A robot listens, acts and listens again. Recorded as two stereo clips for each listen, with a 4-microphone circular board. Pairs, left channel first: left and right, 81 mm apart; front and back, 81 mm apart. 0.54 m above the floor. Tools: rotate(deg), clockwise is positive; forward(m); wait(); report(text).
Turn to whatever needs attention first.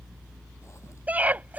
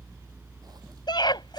rotate(20)
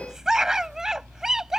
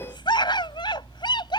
report("Facing the scream.")